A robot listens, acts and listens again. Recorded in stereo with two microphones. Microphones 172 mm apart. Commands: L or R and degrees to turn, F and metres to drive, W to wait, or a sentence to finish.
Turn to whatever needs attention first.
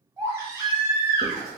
R15
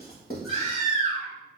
R145
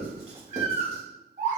R45
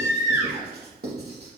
R15
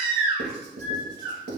Facing the baby crying, 1 to 2 m away.